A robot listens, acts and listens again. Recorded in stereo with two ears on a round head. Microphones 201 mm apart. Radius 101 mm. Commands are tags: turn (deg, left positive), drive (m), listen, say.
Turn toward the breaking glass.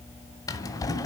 <listen/>
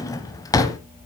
<listen/>
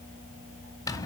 <say>I can't make out breaking glass, only a drawer.</say>